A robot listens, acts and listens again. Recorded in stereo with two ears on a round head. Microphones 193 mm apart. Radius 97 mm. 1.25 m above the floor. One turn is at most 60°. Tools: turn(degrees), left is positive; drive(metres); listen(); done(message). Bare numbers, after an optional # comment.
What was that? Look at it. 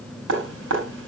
# The dripping: about 65° right or 115° right.
turn(-60)
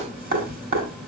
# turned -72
# So it is at 45° right.
turn(-45)
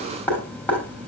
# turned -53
# The dripping is now 10° left.
turn(10)
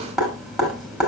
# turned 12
done("Facing the dripping, over 4 m away.")